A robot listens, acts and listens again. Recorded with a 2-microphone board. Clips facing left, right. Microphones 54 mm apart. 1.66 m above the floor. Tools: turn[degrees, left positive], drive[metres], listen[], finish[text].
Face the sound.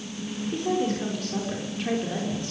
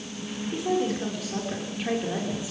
Action: turn[-30]
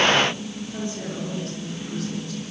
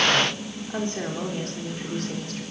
Thought: So it is at 130° right.
Action: turn[-130]
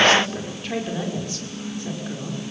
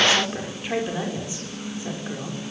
Thought: The woman speaking is now 15° right.
Action: turn[-15]
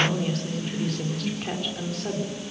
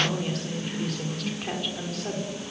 Action: finish[Found it: a woman speaking, straight ahead, over 4 m away.]